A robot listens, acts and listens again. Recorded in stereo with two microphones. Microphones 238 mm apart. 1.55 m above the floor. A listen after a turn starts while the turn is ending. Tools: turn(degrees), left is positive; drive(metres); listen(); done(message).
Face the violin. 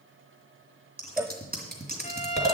turn(degrees=25)
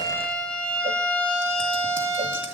done("Facing the violin.")